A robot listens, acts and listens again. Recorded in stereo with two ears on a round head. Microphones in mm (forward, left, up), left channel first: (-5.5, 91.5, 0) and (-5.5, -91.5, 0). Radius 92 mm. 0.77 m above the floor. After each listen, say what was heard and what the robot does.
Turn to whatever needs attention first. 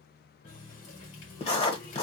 Keep listening.
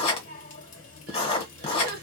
The crying: about 45° right or 135° right. Turn 45° right.
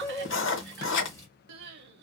So it is at 75° right. Turn 75° right.
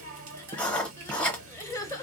The crying is now 20° left. Turn 20° left.
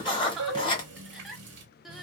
Found it: crying, straight ahead.